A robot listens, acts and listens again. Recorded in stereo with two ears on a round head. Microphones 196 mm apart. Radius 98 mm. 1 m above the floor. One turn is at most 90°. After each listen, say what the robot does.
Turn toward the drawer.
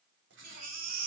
Keep listening.
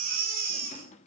Turn 30° left.
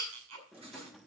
Facing the drawer, under 1 m away.